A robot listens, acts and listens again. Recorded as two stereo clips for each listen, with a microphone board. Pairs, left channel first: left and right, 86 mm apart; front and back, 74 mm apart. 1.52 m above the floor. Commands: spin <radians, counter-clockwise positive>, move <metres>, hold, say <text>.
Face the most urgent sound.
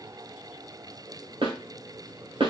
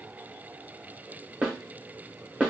hold
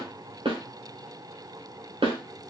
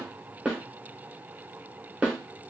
hold
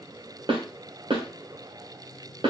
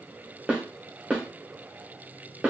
say I can't make out anything urgent, only a snare drum.